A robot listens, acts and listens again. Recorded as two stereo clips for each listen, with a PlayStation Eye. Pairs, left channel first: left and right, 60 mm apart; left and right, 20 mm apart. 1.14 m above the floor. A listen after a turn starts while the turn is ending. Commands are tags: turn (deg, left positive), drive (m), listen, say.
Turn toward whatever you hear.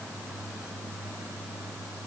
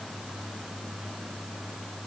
<listen/>
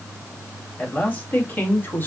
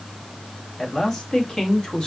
<turn deg="35"/>
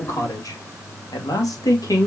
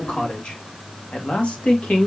<turn deg="100"/>
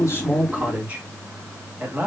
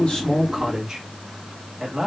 <turn deg="-30"/>
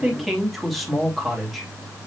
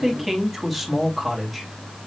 <say>Found it: a man speaking, straight ahead, 2 to 4 m away.</say>